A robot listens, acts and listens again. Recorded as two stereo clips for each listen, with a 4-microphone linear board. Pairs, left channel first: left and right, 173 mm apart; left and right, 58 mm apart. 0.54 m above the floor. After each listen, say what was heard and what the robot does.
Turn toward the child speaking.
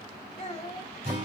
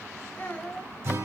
The child speaking: about 35° left or 145° left. Turn 35° left.
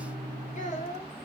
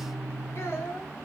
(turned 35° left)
The child speaking: about 45° left or 135° left. Turn 45° left.
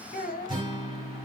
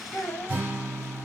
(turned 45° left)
So it is at 125° left. Turn 125° left.
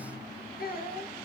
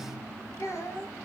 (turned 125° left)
The child speaking is now 60° left. Turn 60° left.
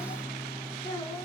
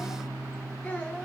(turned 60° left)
The child speaking is now 20° left. Turn 20° left.
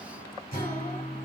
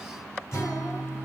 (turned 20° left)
Keep listening.
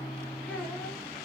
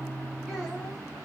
Keep listening.
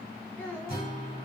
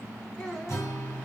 The child speaking is now 10° left. Turn 10° left.
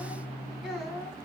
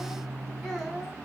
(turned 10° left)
Facing the child speaking.